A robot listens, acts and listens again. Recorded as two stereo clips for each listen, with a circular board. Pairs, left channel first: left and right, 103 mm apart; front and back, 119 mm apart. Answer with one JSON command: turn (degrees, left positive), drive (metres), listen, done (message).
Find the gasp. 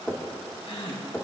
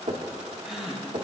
{"turn": 95}
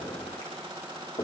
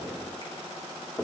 {"done": "I heard a gasp from this way, but can't make it out now."}